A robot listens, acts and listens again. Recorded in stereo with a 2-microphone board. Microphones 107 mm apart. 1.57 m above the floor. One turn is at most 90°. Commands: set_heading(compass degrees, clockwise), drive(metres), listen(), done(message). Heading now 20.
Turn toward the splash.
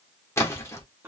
set_heading(355)
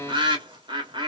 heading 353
listen()
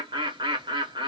done("I heard a splash, but can't make it out now. It was about straight ahead or 125° left.")